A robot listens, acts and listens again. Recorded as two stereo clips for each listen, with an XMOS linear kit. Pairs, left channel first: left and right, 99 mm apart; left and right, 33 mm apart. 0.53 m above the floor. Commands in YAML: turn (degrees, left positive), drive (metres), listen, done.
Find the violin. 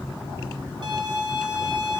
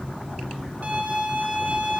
turn: -50
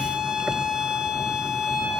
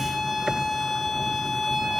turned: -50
turn: -10
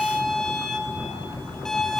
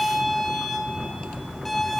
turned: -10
done: "Facing the violin."